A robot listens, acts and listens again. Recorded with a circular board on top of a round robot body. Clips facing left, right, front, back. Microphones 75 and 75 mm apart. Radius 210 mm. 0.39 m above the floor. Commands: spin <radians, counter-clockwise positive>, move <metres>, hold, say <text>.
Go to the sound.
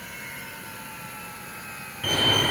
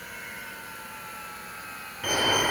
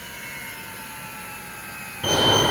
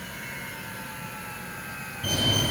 spin -0.26
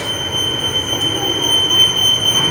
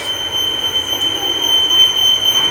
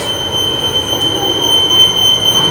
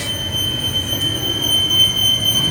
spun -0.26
move 1.0
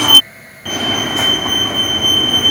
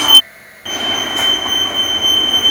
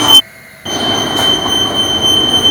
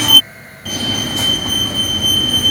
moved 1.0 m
move 1.0
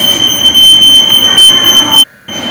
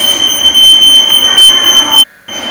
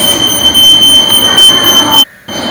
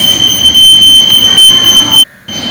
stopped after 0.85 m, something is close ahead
say I am next to the fire alarm.